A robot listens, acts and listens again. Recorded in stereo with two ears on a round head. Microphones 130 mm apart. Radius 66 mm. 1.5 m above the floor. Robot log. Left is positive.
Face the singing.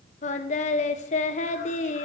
note: The singing: about 50° left or 130° left.
cmd yaw +50
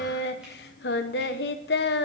note: So it is at 75° left.
cmd yaw +75
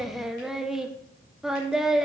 end: Facing the singing.